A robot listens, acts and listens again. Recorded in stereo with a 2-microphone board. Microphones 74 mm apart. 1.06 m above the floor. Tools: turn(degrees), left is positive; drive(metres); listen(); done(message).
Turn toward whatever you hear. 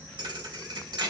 turn(degrees=-75)
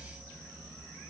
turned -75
listen()
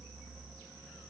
done("I heard a thud, but can't make it out now. It was about straight ahead or 30° right.")